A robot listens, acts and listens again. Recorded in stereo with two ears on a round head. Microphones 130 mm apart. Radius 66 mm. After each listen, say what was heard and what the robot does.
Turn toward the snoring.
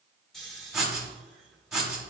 Turn 30° left.
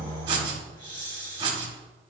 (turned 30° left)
So it is at 145° left. Turn 145° left.
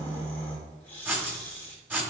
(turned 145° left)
The snoring is now 10° left. Turn 10° left.
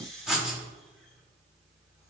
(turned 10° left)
Facing the snoring, 1 to 2 m away.